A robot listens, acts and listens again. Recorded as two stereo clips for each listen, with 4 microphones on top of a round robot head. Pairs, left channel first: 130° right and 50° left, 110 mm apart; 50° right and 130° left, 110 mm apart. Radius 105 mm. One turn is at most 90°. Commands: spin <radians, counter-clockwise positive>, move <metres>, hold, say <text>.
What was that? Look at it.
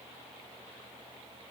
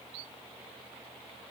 hold
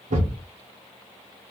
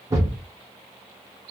spin 1.13
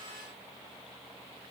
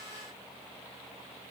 say Facing where the thud came from. I can't hear it now.